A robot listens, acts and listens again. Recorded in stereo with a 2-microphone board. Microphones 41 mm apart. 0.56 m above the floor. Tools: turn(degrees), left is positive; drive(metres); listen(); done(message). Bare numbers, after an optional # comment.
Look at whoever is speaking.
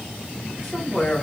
turn(30)
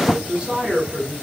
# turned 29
# So it is at 25° right.
turn(-25)
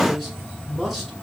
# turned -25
done("Found it: a man speaking, straight ahead.")